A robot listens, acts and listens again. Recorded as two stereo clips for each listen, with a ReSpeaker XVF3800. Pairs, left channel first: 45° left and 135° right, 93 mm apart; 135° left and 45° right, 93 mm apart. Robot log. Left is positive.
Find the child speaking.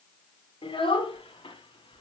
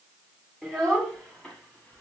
note: The child speaking: 55° left.
cmd yaw +55
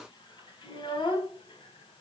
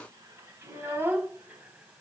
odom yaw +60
note: The child speaking is now 25° left.
cmd yaw +25
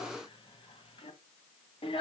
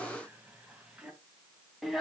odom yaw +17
note: The child speaking is now 45° left.
cmd yaw +45
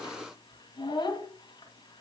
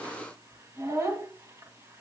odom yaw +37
note: The child speaking is now 10° left.
cmd yaw +10
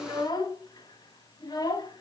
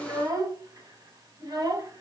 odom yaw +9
end: Facing the child speaking.